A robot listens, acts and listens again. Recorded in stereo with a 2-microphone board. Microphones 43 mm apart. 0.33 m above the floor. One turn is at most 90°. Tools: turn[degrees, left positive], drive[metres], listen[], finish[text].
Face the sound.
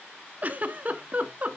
Thought: The giggle: about 35° right or 145° right.
Action: turn[-35]
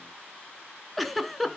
Action: finish[Facing the giggle, 1 to 2 m away.]